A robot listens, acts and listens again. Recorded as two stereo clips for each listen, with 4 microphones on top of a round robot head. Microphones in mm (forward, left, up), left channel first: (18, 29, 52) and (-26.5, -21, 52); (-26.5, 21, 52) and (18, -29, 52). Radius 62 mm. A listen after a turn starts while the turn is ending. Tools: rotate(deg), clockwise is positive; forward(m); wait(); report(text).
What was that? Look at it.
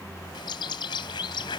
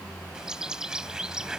rotate(-35)
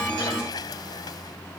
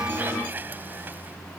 wait()
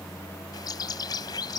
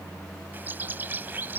rotate(-15)
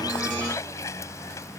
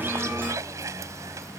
report("Facing the bird.")